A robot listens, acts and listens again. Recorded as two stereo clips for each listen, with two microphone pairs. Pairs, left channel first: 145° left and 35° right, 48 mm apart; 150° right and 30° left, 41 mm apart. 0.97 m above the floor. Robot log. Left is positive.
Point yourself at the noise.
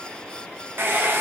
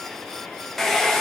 note: The hair dryer: 70° right.
cmd yaw -70
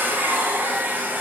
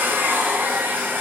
end: Found it: a hair dryer, straight ahead.